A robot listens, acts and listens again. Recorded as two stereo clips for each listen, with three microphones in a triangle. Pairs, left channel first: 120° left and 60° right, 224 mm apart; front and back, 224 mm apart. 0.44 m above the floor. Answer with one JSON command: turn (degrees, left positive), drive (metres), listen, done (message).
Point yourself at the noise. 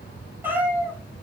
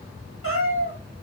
{"turn": 25}
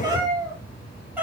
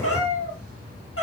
{"turn": 25}
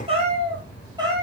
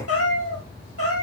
{"turn": 15}
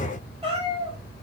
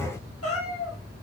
{"turn": 10}
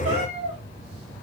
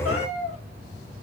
{"done": "Facing the cat meowing."}